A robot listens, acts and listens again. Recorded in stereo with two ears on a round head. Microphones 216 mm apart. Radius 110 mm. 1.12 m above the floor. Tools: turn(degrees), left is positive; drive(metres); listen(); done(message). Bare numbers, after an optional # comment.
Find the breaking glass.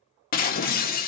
# The breaking glass: about 40° left or 140° left.
turn(40)
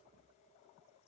listen()
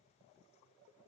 done("I heard breaking glass, but can't make it out now. It was about straight ahead or 100° left.")